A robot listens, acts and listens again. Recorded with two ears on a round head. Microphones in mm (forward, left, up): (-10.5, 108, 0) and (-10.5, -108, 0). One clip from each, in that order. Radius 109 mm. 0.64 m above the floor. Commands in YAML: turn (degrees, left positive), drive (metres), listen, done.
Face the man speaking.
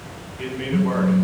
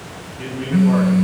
turn: 55
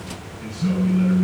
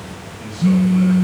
listen: true
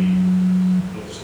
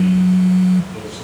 listen: true
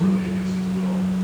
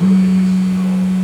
done: "I heard a man speaking, but can't make it out now. It was about straight ahead or 70° left."